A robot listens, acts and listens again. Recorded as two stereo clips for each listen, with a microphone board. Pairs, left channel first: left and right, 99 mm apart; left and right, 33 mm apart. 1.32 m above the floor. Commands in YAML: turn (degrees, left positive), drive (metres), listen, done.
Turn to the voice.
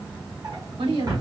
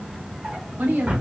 turn: -75
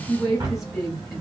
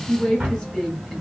done: "Facing the woman speaking, 2 to 4 m away."